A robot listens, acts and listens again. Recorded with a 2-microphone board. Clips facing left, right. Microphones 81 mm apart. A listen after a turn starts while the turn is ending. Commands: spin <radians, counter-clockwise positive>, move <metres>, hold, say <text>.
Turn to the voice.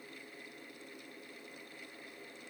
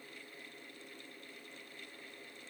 hold
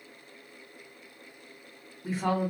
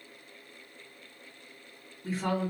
spin 0.26
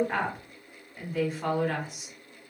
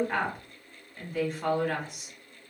say Found it: a woman speaking, straight ahead.